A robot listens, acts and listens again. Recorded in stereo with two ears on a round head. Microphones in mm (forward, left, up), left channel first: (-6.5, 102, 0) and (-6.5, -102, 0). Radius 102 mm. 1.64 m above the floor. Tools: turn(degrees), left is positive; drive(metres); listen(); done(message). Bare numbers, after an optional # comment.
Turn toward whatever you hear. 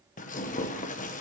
# The tearing paper: about 35° left or 145° left.
turn(35)
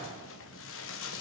# So it is at 110° left.
turn(110)
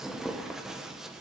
done("Facing the tearing paper, 1 to 2 m away.")